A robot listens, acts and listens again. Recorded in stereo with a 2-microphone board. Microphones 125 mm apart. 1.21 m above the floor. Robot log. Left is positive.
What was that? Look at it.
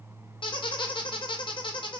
note: The squeak: about 40° left or 140° left.
cmd yaw +40
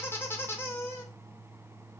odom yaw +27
note: So it is at 20° left.
cmd yaw +20
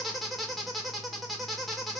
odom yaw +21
end: Found it: a squeak, straight ahead.